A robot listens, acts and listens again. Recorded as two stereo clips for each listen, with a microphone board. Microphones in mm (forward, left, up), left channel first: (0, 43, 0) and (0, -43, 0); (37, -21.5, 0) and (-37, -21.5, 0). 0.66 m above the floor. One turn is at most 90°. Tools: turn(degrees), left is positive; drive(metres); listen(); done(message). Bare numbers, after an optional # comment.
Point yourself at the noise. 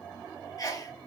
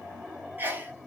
# The sneeze: 125° left.
turn(90)
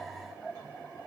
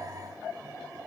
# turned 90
# Nothing new. It was at 35° left.
turn(35)
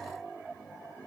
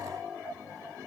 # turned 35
done("Facing where the sneeze came from. I can't hear it now.")